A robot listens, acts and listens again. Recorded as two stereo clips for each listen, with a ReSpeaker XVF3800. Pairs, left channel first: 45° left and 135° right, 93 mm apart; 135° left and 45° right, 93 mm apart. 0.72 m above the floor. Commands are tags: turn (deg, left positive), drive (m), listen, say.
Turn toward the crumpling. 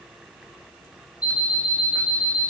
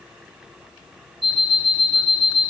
<listen/>
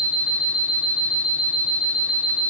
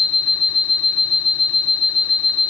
<listen/>
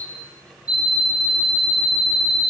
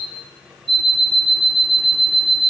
<say>I can't make out crumpling, only an alarm clock.</say>